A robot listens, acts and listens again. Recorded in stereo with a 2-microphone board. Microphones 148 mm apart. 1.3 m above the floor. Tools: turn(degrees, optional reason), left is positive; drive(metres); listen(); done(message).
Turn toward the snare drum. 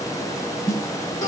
turn(degrees=20, reason="The snare drum: about 20° left or 160° left.")
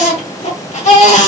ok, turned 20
listen()
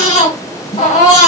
turn(degrees=135, reason="So it is at 135° left.")
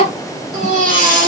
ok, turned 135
listen()
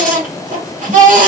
listen()
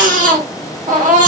done("Facing where the snare drum came from. I can't hear it now.")